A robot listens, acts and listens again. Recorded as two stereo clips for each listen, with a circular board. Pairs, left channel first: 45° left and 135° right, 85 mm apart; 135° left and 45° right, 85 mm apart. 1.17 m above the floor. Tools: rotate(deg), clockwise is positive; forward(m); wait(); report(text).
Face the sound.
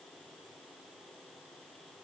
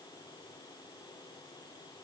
wait()
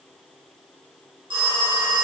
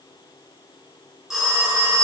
rotate(130)
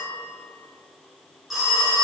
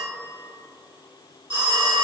rotate(45)
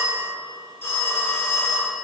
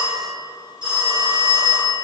rotate(20)
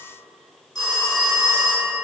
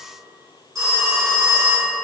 report("Facing the phone ringing.")